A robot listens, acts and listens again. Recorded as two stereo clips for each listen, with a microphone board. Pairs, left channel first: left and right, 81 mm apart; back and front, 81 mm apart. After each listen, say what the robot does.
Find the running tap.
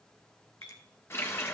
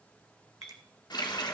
Turn 150° left.
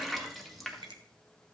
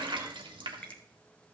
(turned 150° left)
Found it: a running tap, straight ahead.